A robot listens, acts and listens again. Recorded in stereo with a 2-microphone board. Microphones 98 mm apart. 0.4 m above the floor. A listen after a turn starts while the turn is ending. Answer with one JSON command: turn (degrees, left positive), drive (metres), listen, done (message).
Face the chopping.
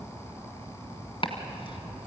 {"turn": 60}
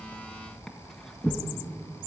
{"done": "Found it: chopping, straight ahead, 2 to 4 m away."}